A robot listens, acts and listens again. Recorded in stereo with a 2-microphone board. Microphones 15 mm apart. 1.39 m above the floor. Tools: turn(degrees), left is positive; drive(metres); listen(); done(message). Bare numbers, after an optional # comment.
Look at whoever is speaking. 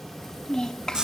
# The child speaking: about 60° left or 120° left.
turn(60)
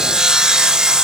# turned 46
listen()
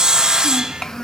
# So it is at 55° left.
turn(55)
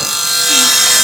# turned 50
listen()
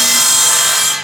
listen()
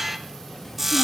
done("Facing where the child speaking came from. I can't hear it now.")